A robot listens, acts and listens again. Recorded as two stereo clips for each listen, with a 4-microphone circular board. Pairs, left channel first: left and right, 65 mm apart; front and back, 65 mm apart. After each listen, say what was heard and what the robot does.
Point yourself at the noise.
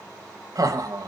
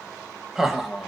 The laughter: 95° right. Turn 95° right.
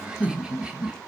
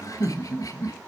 The laughter is now 15° right. Turn 15° right.
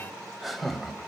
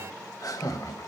Found it: laughter, straight ahead.